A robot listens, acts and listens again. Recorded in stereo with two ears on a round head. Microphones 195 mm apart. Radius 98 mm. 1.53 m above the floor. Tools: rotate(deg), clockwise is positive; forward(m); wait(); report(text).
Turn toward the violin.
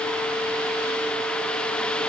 wait()
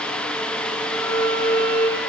rotate(-35)
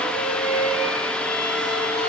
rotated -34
rotate(-110)
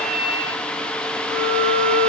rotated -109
report("Facing the violin, over 4 m away.")